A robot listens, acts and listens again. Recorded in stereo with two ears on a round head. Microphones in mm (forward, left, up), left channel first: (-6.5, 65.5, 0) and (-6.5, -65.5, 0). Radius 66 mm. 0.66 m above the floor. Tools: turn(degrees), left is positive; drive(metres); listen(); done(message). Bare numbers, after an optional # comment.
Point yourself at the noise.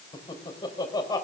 # The laughter: about 25° left or 155° left.
turn(25)
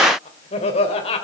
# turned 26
# The laughter: about 40° left or 140° left.
turn(40)
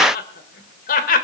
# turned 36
# So it is at 120° left.
turn(120)
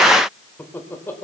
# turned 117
# The laughter is now 15° left.
turn(15)
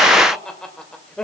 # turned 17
done("Found it: laughter, straight ahead.")